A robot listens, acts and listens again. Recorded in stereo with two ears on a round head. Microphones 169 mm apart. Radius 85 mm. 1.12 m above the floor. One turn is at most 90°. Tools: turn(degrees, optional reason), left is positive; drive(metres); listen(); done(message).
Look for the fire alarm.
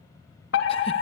turn(degrees=65, reason="The fire alarm: about 65° left or 115° left.")
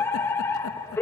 turn(degrees=15, reason="So it is at 15° left.")
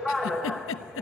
done("Facing the fire alarm.")